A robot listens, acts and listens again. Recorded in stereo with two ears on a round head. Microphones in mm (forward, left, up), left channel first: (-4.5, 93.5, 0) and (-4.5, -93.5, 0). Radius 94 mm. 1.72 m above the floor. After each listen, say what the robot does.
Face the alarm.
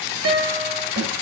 Keep listening.
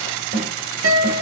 Keep listening.
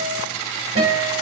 I can't make out an alarm, only a snare drum and a guitar.